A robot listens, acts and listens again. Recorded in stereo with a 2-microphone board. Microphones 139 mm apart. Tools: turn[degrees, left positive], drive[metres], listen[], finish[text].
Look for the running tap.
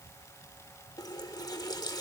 Thought: The running tap: about 30° left or 150° left.
Action: turn[30]
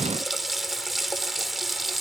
Action: finish[Facing the running tap, 1 to 2 m away.]